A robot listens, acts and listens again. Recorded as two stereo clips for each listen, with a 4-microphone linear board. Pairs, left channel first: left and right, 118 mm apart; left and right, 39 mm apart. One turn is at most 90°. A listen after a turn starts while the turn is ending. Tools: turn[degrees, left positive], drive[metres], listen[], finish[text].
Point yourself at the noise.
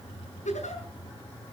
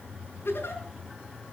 Action: turn[90]
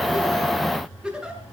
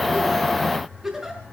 Action: finish[Facing the giggle, over 4 m away.]